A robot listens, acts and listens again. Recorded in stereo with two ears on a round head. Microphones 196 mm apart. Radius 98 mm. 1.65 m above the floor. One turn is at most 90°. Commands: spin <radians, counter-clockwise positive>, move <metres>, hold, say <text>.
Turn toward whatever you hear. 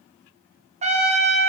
spin -0.52
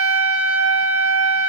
spin -1.57
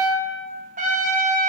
spin -0.61
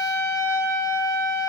spin 0.26
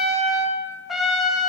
say Facing the trumpet.